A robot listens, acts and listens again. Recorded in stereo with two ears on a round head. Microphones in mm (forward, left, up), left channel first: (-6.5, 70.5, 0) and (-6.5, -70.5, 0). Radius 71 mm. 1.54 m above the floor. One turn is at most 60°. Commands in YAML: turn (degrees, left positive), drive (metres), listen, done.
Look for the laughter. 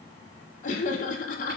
turn: 50
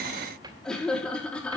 done: "Found it: laughter, straight ahead."